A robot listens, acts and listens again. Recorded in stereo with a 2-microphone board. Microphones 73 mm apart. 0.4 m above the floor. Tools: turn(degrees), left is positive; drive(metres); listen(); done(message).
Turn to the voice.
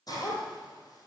listen()
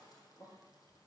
listen()
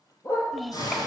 turn(degrees=30)
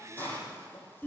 turn(degrees=150)
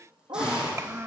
turn(degrees=-40)
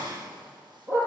listen()
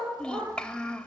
turn(degrees=15)
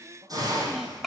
done("Found it: a child speaking, straight ahead.")